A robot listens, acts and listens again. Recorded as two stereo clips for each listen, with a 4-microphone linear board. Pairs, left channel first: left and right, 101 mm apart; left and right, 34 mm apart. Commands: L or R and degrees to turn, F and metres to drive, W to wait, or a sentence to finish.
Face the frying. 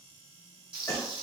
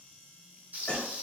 R55
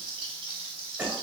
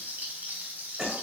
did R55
R65
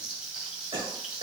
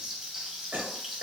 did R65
R10
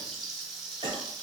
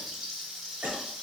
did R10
Facing the frying.